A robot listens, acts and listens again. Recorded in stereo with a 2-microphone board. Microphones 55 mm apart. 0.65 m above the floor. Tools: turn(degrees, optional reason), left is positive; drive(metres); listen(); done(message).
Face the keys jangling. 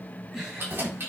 turn(degrees=-45, reason="The keys jangling: about 45° right or 135° right.")
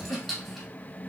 done("Facing the keys jangling, 2 to 4 m away.")